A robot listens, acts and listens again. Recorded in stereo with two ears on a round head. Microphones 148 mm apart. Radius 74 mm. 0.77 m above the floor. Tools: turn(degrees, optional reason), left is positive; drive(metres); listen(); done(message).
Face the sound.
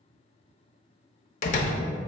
turn(degrees=50, reason="The door slam: about 50° left or 130° left.")
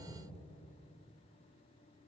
listen()
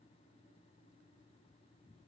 done("I heard a door slam, but can't make it out now. It was about straight ahead or 80° left.")